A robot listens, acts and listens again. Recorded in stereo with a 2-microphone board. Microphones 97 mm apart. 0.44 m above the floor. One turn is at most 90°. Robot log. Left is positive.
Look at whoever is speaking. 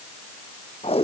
cmd idle
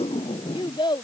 note: The child speaking: about 50° left or 130° left.
cmd yaw +50
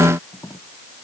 cmd idle
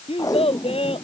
note: So it is at 80° left.
cmd yaw +80
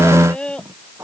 note: The child speaking is now 10° left.
cmd yaw +10
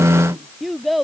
end: Found it: a child speaking, straight ahead.